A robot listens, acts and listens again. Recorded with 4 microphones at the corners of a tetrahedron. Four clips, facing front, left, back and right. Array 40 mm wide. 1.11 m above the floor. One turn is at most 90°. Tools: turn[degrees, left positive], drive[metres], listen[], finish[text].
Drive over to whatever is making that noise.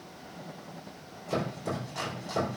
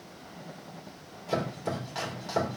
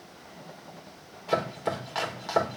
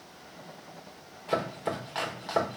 Thought: The chopping: 150° right.
Action: turn[-90]
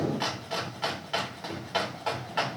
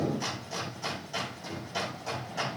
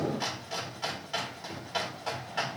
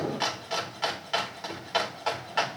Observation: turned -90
Thought: The chopping is now 70° right.
Action: turn[-70]
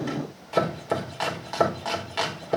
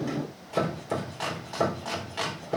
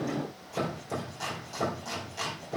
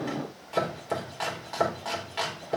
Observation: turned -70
Action: drive[1.0]
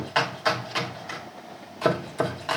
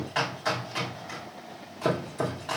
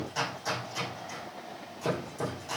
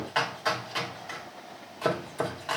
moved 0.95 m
Thought: The chopping is now 10° right.
Action: turn[-10]
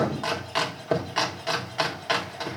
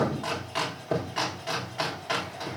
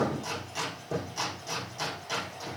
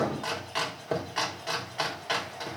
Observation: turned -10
Action: drive[1.0]
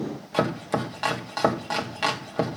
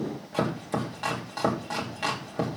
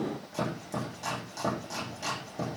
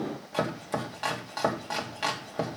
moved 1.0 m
Action: drive[1.0]
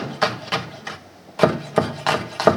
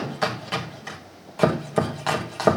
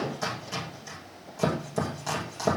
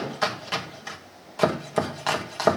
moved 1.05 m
Action: drive[1.0]
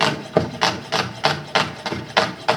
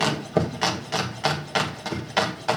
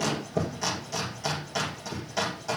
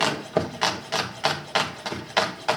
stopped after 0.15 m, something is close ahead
Action: finish[I am next to the chopping.]